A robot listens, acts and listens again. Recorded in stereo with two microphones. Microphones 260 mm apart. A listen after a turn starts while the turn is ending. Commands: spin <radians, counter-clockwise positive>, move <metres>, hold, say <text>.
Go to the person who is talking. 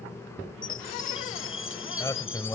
spin 0.52
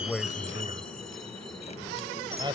spin -0.35
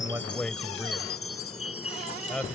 move 1.0
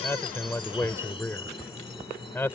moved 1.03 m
spin 0.17
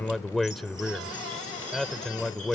move 1.0
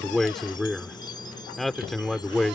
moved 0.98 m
move 1.0
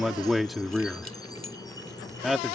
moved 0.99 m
move 1.0
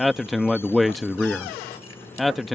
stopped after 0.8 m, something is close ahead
say I am next to the man speaking.